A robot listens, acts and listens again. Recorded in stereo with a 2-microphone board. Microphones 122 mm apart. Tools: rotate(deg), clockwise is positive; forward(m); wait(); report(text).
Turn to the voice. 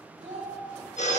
rotate(70)
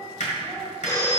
wait()
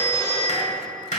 wait()
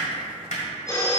report("I heard a child speaking, but can't make it out now. It was about straight ahead or 40° right.")